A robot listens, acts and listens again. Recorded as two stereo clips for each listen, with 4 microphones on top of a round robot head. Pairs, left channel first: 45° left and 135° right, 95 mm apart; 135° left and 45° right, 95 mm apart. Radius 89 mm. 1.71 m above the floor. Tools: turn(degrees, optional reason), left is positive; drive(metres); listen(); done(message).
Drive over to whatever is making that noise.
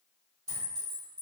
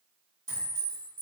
turn(degrees=-100, reason="The clink: 100° right.")
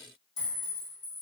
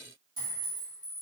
drive(metres=1.0)
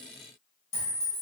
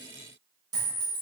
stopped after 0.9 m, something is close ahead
turn(degrees=15, reason="The clink is now 15° left.")
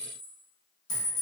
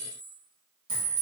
done("I am next to the clink.")